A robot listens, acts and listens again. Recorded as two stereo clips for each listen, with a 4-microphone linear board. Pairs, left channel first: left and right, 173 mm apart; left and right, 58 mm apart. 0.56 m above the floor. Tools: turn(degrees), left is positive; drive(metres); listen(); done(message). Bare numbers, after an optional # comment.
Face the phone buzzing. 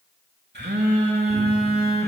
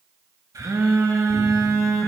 turn(-90)
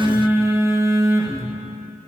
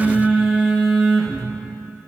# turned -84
# So it is at 15° right.
turn(-15)
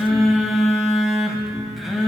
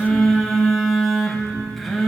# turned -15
done("Facing the phone buzzing.")